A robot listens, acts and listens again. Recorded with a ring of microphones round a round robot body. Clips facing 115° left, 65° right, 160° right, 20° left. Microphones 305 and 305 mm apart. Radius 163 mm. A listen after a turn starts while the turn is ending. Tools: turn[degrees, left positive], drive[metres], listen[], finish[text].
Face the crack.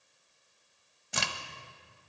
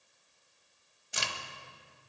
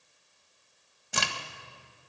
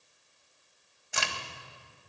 Thought: The crack: 150° left.
Action: turn[150]
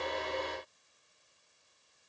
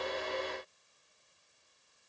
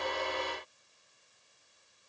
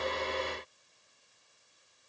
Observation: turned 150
Action: finish[I heard a crack from this way, but can't make it out now.]